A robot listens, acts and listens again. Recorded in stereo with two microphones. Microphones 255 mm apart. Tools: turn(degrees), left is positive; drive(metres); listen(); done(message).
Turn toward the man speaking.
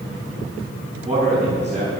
turn(degrees=-30)
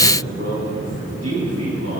turn(degrees=-115)
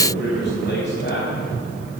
turn(degrees=45)
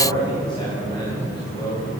turn(degrees=20)
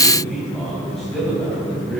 done("Facing the man speaking, over 4 m away.")